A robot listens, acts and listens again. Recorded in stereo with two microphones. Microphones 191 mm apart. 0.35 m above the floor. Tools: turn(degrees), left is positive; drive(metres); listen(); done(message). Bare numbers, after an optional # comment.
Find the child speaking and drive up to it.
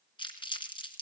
listen()
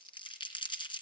listen()
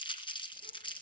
done("I can't make out a child speaking to turn to.")